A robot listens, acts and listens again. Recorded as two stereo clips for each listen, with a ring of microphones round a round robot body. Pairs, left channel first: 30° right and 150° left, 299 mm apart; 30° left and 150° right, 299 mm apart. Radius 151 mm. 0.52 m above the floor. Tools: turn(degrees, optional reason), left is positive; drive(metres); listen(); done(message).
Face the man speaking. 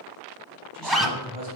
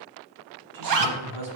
turn(degrees=-145, reason="The man speaking: 145° right.")
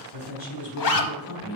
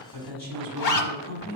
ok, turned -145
turn(degrees=-25, reason="The man speaking is now 25° right.")
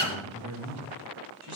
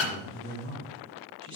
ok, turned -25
turn(degrees=10, reason="The man speaking is now 10° left.")
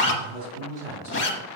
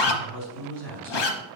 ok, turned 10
done("Found it: a man speaking, straight ahead.")